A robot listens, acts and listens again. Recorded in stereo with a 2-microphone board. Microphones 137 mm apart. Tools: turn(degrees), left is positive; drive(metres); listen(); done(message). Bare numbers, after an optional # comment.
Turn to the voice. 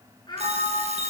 # The child speaking: about 30° left or 150° left.
turn(30)
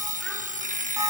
listen()
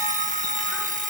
listen()
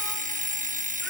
done("I heard a child speaking, but can't make it out now. It was about straight ahead or 120° left.")